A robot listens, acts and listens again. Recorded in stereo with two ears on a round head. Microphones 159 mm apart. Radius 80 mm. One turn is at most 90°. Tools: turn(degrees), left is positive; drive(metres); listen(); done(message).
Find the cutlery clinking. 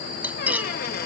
turn(degrees=-30)
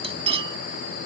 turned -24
turn(degrees=-90)
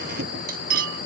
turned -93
turn(degrees=-55)
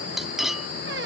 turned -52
done("Found it: cutlery clinking, straight ahead.")